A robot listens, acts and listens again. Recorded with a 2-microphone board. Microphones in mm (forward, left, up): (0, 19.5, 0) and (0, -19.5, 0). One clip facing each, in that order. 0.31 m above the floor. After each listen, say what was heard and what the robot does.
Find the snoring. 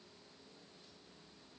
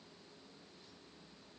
Keep listening.
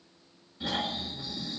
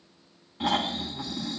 The snoring: about 65° right or 115° right. Turn 65° right.
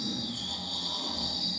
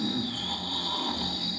So it is at 35° right. Turn 35° right.
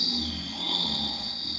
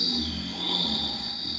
Facing the snoring.